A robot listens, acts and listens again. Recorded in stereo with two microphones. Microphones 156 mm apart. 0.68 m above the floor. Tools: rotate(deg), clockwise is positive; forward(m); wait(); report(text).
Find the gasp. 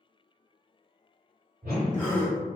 rotate(-30)
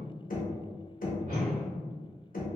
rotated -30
wait()
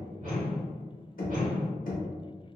report("I heard a gasp, but can't make it out now. It was about 20° right or 140° left.")